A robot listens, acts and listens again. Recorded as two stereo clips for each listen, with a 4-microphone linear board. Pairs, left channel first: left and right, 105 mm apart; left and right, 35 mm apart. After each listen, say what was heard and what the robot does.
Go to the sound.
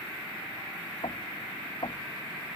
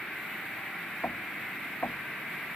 The knocking: about 60° left or 120° left. Turn 60° left.
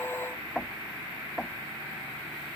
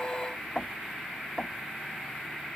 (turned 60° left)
Drive 1.0 m forward.
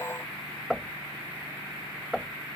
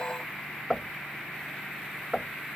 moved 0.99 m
Drive 1.0 m forward.
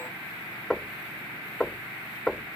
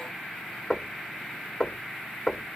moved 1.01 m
The knocking is now 10° left. Turn 10° left.
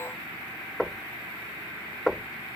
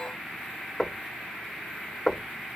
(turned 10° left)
Drive 1.0 m forward.
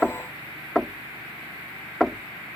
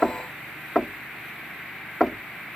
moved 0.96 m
Drive 1.0 m forward.
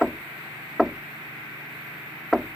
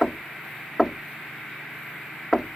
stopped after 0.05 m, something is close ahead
I am next to the knocking.